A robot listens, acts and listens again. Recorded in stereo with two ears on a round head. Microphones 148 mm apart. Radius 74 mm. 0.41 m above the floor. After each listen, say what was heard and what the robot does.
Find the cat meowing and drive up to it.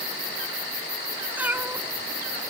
Turn 30° right.
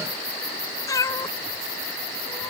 So it is at 20° left. Turn 20° left.
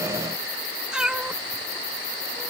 Drive 1.0 m forward.
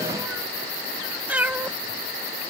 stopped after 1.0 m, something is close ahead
The cat meowing is now 10° right. Turn 10° right.
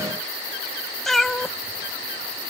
I am next to the cat meowing.